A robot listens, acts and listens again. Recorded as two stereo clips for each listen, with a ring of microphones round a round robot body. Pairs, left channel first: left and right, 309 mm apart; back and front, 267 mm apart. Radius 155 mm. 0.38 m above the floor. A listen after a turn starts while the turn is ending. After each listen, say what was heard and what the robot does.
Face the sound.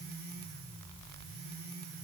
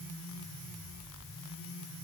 Keep listening.
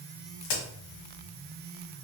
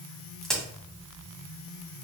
The crack: 90° left. Turn 90° left.
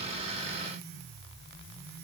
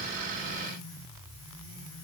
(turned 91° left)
Facing where the crack came from. I can't hear it now.